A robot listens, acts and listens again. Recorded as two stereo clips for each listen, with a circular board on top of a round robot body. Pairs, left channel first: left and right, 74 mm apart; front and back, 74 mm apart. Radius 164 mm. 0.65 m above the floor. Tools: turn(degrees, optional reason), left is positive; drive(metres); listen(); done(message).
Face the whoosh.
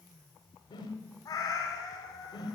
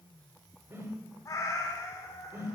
turn(degrees=120, reason="The whoosh: 120° left.")
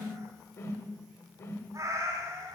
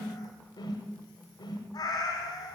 turn(degrees=35, reason="The whoosh is now 35° left.")
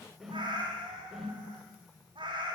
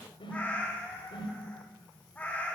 done("Found it: a whoosh, straight ahead.")